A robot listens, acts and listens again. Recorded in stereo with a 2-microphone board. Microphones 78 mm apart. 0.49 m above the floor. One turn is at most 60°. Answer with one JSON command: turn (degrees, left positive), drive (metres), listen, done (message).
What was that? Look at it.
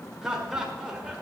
{"turn": -30}
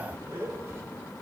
{"turn": -60}
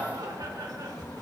{"turn": -60}
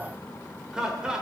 {"turn": -10}
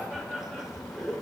{"done": "Found it: laughter, straight ahead."}